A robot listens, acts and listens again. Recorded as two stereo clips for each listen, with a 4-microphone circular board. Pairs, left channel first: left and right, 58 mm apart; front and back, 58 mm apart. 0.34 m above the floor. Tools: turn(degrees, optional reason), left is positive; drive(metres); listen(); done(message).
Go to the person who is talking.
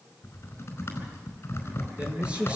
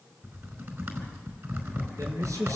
turn(degrees=-160, reason="The man speaking: 160° right.")
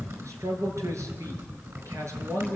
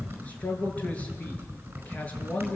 turn(degrees=-60, reason="The man speaking is now 60° right.")
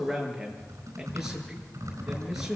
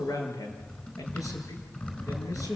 drive(metres=1.0)
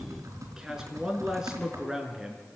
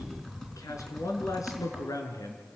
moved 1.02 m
turn(degrees=-10, reason="The man speaking is now 10° right.")
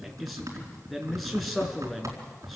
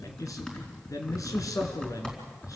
drive(metres=1.0)
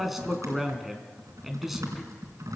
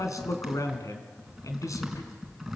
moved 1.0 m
drive(metres=1.0)
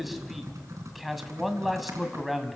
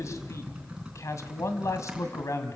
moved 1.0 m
drive(metres=1.0)
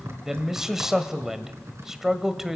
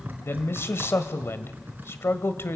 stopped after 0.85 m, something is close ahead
turn(degrees=-10, reason="The man speaking is now 10° right.")
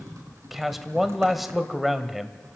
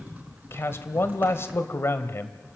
done("Arrived at the man speaking, straight ahead.")